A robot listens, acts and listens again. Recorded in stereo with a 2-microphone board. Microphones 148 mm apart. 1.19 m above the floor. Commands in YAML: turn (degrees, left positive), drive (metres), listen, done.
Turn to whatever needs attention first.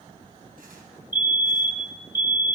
turn: 30
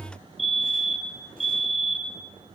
done: "Facing the fire alarm."